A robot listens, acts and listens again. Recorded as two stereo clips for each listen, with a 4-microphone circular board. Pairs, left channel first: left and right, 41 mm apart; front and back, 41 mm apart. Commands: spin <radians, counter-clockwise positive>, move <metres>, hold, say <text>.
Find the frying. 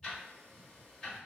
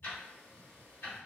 hold
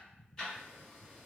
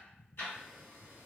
hold
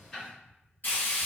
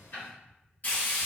spin 0.87
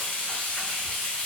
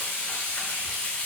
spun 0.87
spin 0.35
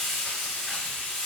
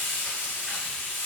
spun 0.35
say Found it: frying, straight ahead, 1 to 2 m away.